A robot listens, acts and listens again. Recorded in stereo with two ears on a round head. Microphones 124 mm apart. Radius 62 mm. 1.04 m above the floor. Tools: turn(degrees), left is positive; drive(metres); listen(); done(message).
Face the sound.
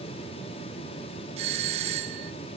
turn(degrees=-45)
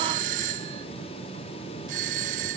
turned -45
turn(degrees=-80)
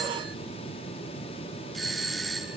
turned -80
done("Facing the doorbell.")